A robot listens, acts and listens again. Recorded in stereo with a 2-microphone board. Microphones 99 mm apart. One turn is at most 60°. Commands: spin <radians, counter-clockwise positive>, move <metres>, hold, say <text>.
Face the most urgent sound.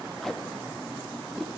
hold
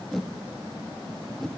hold
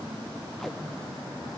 say I can't make out anything urgent, only tape being pulled.